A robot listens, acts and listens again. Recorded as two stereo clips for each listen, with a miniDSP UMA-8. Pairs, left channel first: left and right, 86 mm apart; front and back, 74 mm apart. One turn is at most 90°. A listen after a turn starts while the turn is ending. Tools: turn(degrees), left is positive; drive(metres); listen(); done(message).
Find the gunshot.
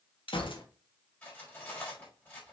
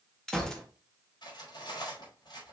turn(degrees=85)
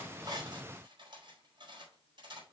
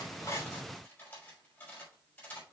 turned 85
done("Facing where the gunshot came from. I can't hear it now.")